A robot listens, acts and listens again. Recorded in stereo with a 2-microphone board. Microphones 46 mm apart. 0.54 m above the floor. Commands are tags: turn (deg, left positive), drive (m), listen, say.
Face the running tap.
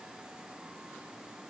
<listen/>
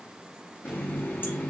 <turn deg="40"/>
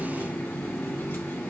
<turn deg="100"/>
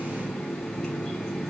<turn deg="25"/>
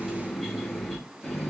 <turn deg="10"/>
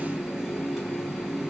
<say>Facing the running tap, 1 to 2 m away.</say>